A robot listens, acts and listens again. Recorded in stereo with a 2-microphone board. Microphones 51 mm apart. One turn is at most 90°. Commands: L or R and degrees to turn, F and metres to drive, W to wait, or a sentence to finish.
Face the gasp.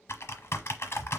W
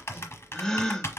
L30
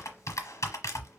W
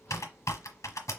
I heard a gasp, but can't make it out now. It was about 20° right or 140° left.